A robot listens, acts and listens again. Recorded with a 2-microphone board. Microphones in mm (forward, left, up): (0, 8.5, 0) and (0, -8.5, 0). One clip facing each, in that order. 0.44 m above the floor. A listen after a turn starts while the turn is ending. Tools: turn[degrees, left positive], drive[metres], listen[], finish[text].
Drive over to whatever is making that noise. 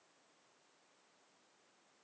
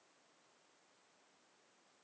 Action: listen[]
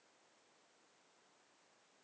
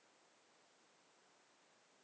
Action: listen[]
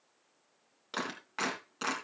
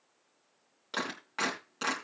Action: turn[-30]
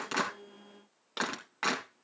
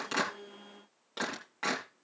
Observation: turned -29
Thought: So it is at 25° left.
Action: turn[25]
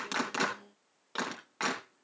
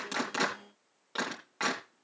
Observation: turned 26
Action: drive[1.0]
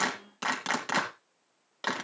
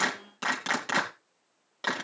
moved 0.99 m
Action: drive[1.0]
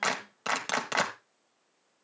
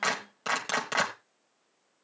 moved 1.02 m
Action: drive[1.0]
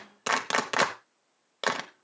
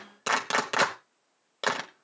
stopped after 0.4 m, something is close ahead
Action: finish[Arrived at the clap, straight ahead.]